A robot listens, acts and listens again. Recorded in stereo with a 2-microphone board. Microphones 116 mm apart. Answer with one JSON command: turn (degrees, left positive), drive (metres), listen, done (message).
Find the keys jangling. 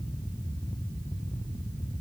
{"listen": true}
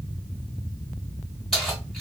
{"turn": 30}
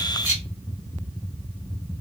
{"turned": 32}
{"turn": -25}
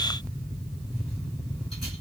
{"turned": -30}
{"listen": true}
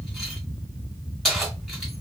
{"done": "Facing the keys jangling."}